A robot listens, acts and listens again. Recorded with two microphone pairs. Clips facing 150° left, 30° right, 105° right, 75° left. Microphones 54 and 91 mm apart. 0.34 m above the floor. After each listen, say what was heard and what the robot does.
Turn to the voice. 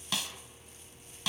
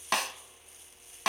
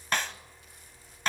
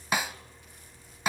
Keep listening.
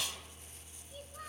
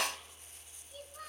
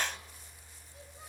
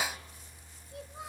The child speaking: 65° left. Turn 65° left.
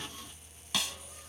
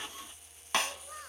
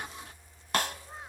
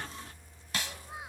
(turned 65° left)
Found it: a child speaking, straight ahead.